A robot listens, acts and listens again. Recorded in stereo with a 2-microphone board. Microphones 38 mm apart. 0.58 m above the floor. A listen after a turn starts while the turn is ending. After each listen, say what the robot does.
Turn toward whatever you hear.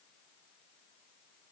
Keep listening.
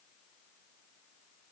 Keep listening.
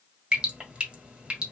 Turn 25° right.
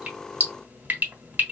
Turn 125° right.
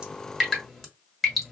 Facing the dripping.